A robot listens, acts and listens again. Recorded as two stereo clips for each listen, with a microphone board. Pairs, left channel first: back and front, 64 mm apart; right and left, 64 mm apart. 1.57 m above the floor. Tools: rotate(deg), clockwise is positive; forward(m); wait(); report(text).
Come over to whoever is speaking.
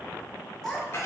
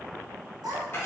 rotate(-95)
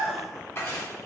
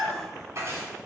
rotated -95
forward(1.0)
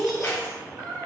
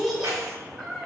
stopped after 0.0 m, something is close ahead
report("Something is in my way. I am facing the child speaking but have not reached it.")